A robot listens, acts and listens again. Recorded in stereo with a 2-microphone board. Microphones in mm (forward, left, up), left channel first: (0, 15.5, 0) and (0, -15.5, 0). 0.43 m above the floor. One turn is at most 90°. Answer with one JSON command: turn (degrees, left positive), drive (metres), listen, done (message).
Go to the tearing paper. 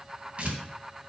{"turn": -40}
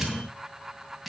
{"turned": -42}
{"drive": 1.0}
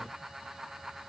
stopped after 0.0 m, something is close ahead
{"listen": true}
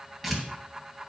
{"done": "Something is in my way. I am facing the tearing paper but have not reached it."}